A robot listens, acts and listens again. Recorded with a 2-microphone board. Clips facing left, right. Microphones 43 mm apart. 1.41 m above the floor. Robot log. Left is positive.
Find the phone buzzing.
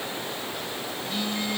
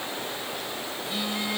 cmd yaw -30
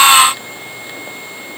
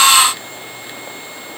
cmd idle
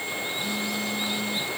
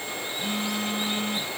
note: So it is at 140° right.
cmd yaw -140
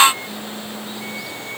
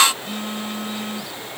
note: The phone buzzing is now 60° right.
cmd yaw -60
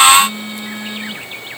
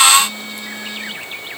note: The phone buzzing is now 20° left.
cmd yaw +20
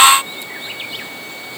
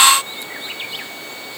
cmd idle
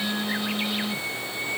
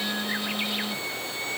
end: Found it: a phone buzzing, straight ahead.